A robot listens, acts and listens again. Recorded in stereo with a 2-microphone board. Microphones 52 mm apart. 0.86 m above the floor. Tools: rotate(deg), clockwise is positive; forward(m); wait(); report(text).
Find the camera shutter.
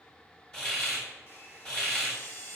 rotate(-50)
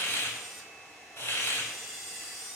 report("Facing the camera shutter, 1 to 2 m away.")